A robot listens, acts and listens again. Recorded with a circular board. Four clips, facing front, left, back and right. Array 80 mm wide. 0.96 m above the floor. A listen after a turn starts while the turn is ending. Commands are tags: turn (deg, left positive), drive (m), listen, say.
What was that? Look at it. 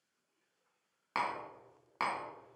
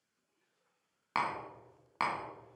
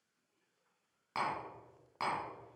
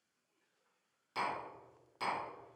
<turn deg="70"/>
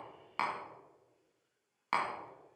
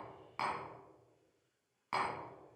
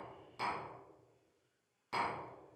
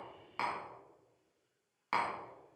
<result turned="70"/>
<turn deg="-20"/>
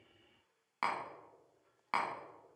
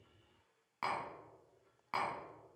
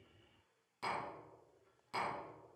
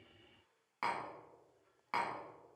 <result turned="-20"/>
<say>Found it: tapping, straight ahead, 1 to 2 m away.</say>